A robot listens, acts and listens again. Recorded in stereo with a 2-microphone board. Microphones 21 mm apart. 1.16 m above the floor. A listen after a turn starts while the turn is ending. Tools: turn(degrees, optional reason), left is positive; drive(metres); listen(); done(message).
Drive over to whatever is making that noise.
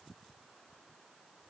listen()
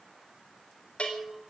turn(degrees=65, reason="The bell: about 65° left or 115° left.")
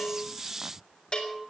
turn(degrees=50, reason="So it is at 50° left.")
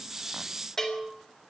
turn(degrees=30, reason="The bell is now 30° left.")
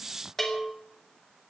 turn(degrees=20, reason="The bell is now 20° left.")
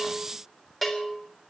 drive(metres=1.0)
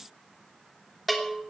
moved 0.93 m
drive(metres=1.0)
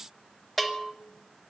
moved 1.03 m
turn(degrees=10, reason="The bell is now 10° left.")
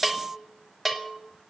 drive(metres=1.0)
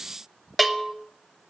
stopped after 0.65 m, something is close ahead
done("I am next to the bell.")